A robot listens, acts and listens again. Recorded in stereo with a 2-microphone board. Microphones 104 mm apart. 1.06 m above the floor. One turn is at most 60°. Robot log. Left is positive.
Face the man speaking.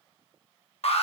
cmd idle
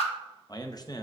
note: The man speaking: about 40° left or 140° left.
cmd yaw +40
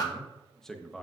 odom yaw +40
end: Found it: a man speaking, straight ahead.